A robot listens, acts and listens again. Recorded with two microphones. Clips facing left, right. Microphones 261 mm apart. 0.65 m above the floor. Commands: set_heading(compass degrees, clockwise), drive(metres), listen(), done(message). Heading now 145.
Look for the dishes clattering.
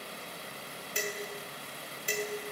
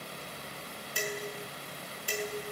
set_heading(120)
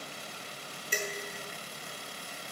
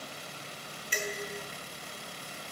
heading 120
set_heading(350)
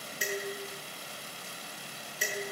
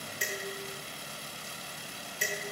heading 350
done("Found it: dishes clattering, straight ahead, over 4 m away.")